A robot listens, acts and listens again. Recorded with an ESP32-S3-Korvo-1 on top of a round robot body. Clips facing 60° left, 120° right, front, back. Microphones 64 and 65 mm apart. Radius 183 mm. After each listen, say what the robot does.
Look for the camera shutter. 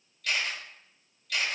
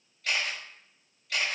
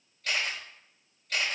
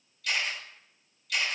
Turn 55° right.
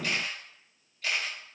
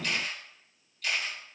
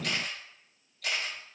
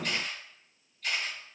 Found it: a camera shutter, straight ahead.